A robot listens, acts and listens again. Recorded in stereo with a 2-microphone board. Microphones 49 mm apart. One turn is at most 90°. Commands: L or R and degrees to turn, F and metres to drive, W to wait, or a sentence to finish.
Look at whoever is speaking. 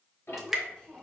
L20
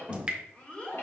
L30
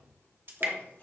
W
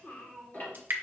L30
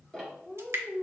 L25
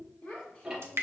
L90
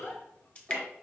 L55
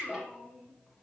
Found it: a child speaking, straight ahead.